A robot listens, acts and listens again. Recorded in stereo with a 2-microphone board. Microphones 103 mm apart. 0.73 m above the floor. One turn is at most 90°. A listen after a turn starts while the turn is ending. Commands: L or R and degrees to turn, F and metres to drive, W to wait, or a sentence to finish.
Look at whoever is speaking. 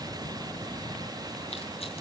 W
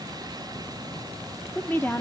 L20
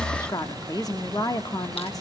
L90
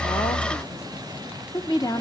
L40
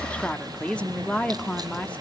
L10
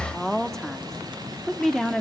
Facing the woman speaking.